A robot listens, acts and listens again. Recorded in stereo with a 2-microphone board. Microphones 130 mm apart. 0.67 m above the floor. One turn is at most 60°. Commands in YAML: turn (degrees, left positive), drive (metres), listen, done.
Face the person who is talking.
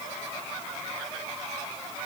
listen: true
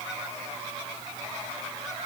listen: true
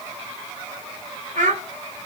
turn: -60
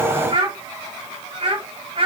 turn: -40
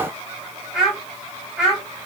done: "Found it: a child speaking, straight ahead."